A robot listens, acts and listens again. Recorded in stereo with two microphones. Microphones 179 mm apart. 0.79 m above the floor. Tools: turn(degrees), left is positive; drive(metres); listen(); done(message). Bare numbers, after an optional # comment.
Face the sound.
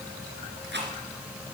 turn(-90)
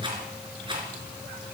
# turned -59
# So it is at 25° right.
turn(-25)
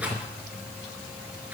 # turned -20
# The rattle is now 10° right.
turn(-10)
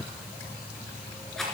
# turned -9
done("Found it: a rattle, straight ahead, 2 to 4 m away.")